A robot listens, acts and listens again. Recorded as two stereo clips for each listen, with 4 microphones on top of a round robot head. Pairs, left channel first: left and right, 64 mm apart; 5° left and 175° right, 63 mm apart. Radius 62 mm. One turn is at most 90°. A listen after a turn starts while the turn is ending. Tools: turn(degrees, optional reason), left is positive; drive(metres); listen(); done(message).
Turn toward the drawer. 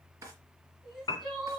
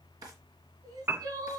turn(degrees=-90, reason="The drawer: 145° right.")
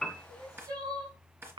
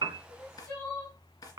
turn(degrees=-35, reason="The drawer is now 35° right.")
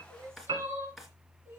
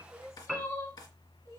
done("Found it: a drawer, straight ahead.")